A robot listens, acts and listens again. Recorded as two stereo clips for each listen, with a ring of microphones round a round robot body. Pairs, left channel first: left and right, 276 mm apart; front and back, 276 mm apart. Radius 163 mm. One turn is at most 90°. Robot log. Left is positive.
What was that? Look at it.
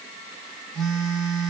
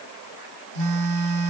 note: The phone buzzing: straight behind.
cmd yaw +90
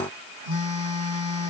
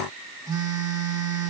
note: The phone buzzing is now 100° left.
cmd yaw +90
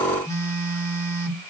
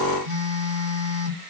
note: The phone buzzing is now 10° left.
cmd yaw +10
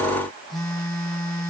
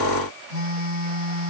end: Found it: a phone buzzing, straight ahead, 2 to 4 m away.